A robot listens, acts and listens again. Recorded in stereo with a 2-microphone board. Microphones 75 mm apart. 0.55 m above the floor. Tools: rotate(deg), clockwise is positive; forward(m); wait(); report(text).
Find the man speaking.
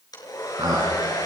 rotate(75)
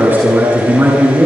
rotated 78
rotate(30)
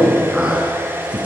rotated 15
rotate(15)
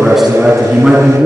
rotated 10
report("Found it: a man speaking, straight ahead, over 4 m away.")